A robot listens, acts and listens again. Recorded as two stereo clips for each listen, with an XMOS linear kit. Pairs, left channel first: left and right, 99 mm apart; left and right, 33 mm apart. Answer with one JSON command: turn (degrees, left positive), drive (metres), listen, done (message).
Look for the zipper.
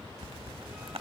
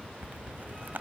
{"turn": -70}
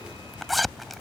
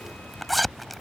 {"done": "Facing the zipper."}